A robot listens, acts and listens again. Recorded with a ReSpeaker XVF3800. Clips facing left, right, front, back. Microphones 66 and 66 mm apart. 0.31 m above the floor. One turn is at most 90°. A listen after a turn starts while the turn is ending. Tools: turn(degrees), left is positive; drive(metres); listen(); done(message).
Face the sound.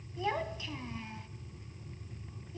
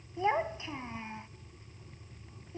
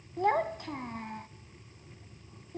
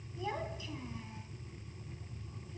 turn(degrees=-30)
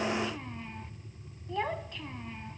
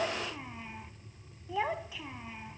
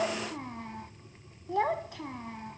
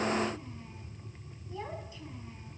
done("Found it: a child speaking, straight ahead, 1 to 2 m away.")